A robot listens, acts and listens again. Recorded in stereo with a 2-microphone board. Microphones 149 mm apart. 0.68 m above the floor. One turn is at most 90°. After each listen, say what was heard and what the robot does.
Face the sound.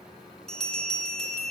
Turn 30° left.
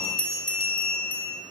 So it is at 145° left. Turn 90° left.
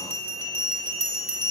The bell is now 40° left. Turn 40° left.
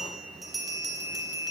Facing the bell, 1 to 2 m away.